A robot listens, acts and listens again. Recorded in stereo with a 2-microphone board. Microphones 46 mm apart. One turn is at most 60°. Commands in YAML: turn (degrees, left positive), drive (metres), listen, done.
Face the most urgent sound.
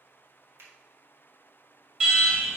turn: -20
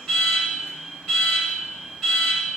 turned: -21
done: "Facing the alarm, 2 to 4 m away."